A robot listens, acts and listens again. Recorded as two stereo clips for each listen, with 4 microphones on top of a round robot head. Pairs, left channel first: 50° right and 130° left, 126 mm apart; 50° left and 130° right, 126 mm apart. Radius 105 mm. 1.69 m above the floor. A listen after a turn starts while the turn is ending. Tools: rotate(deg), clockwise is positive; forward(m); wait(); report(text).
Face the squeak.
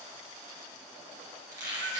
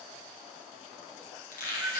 rotate(-65)
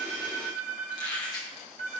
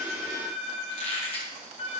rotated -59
rotate(-10)
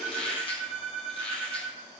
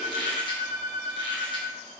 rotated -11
report("Found it: a squeak, straight ahead, 1 to 2 m away.")